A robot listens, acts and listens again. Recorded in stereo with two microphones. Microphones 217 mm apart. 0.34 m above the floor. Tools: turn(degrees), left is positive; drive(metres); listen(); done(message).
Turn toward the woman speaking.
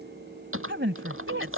turn(degrees=-65)
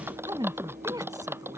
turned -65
turn(degrees=-15)
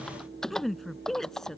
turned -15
done("Found it: a woman speaking, straight ahead.")